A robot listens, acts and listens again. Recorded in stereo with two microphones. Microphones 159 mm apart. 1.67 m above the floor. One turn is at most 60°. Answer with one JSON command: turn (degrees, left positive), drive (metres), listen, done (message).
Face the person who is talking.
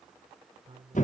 {"turn": -35}
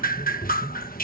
{"listen": true}
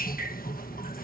{"listen": true}
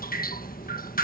{"done": "I heard a man speaking, but can't make it out now. It was about straight ahead or 110° right."}